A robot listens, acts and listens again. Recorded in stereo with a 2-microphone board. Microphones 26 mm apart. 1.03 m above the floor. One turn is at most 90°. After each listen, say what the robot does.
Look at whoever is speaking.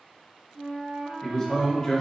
Turn 30° left.
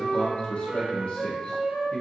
Turn 90° left.
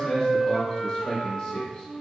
Turn 20° left.
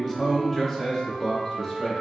Found it: a man speaking, straight ahead, 1 to 2 m away.